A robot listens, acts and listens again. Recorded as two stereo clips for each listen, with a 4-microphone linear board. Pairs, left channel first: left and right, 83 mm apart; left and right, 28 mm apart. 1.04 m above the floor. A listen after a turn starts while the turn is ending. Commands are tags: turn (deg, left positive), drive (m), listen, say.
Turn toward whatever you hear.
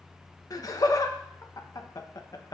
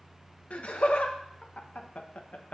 <turn deg="45"/>
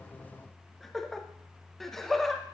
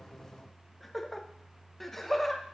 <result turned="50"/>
<say>Facing the laughter, 1 to 2 m away.</say>